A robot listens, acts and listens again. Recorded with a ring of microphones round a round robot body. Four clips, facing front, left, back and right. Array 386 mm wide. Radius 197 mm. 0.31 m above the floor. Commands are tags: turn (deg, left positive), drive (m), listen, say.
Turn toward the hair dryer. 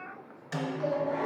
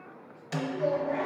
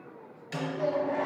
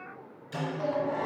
<turn deg="-85"/>
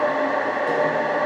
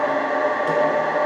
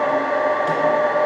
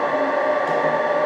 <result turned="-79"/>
<say>Found it: a hair dryer, straight ahead, 1 to 2 m away.</say>